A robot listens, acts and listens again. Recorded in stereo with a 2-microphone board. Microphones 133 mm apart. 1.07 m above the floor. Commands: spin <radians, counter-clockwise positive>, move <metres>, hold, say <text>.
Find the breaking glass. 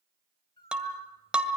spin -0.52
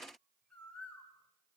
hold
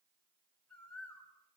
say I heard breaking glass, but can't make it out now. It was about 20° left or 140° right.